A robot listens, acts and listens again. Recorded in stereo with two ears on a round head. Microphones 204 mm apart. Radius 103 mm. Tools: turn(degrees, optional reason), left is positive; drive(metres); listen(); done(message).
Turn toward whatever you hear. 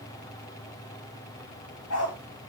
turn(degrees=70, reason="The dog barking: about 70° left or 110° left.")
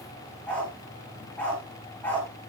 turn(degrees=10, reason="So it is at 10° left.")
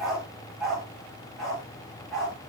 done("Found it: a dog barking, straight ahead, over 4 m away.")